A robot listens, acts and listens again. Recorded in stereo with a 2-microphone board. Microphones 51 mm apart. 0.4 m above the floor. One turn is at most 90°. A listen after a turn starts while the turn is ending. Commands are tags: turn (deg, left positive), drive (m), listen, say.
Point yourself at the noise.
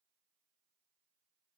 <listen/>
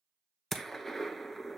<turn deg="30"/>
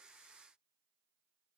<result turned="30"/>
<listen/>
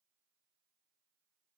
<say>I heard a gunshot, but can't make it out now. It was about 25° right or 145° left.</say>